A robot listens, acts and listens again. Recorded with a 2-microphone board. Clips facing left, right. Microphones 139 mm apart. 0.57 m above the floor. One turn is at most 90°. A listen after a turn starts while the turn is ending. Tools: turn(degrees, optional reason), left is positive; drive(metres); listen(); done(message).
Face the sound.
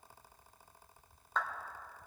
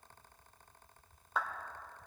turn(degrees=-30)
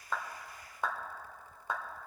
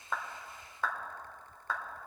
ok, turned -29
turn(degrees=20, reason="So it is at 20° left.")
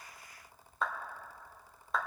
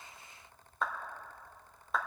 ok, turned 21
done("Facing the clap.")